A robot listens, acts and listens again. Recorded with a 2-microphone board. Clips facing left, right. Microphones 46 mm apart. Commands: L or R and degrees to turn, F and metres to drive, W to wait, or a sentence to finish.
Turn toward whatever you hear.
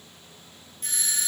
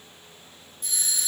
L50
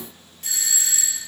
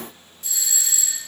L75
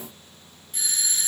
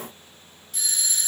L25
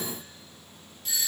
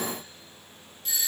Found it: a doorbell, straight ahead.